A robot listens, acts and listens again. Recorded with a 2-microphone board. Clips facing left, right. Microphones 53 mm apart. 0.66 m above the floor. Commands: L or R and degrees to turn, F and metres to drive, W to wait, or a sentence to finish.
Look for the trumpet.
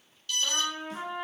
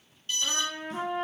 R55
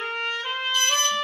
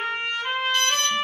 R20
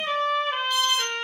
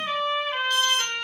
Found it: a trumpet, straight ahead, 1 to 2 m away.